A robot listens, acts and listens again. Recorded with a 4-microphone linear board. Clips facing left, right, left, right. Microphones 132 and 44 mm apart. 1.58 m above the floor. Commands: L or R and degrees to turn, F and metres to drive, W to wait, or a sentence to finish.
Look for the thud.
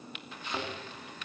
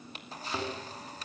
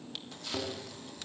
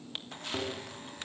R30
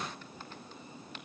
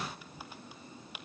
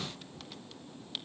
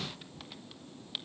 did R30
W
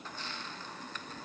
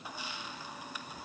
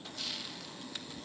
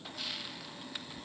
I heard a thud, but can't make it out now. It was about 25° left or 145° right.